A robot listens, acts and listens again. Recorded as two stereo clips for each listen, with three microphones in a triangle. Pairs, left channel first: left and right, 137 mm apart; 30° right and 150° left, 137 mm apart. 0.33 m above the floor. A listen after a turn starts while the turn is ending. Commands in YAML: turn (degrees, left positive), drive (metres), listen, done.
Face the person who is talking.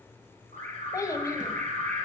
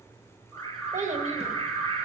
turn: 150
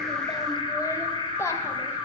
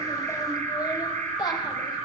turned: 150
turn: 20
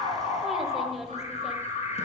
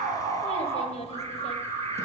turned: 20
done: "Found it: a child speaking, straight ahead."